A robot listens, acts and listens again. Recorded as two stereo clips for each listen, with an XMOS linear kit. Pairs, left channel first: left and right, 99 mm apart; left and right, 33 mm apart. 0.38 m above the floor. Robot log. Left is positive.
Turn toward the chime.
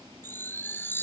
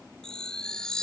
note: The chime: about 20° left or 160° left.
cmd yaw +20
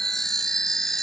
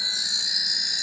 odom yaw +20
end: Found it: a chime, straight ahead.